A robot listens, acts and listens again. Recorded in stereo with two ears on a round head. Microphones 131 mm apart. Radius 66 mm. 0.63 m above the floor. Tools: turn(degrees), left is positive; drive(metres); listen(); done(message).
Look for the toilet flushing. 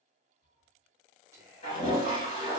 turn(degrees=45)
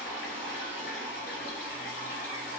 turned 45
turn(degrees=90)
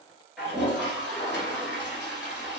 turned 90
done("Found it: a toilet flushing, straight ahead.")